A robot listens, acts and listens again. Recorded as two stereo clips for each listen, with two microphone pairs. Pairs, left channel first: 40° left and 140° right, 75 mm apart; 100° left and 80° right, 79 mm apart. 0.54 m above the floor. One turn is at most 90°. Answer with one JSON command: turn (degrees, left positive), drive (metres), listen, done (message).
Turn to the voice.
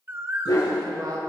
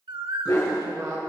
{"turn": -90}
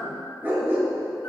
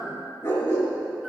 {"turn": -30}
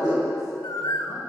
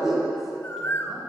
{"listen": true}
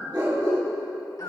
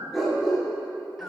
{"done": "Facing where the woman speaking came from. I can't hear it now."}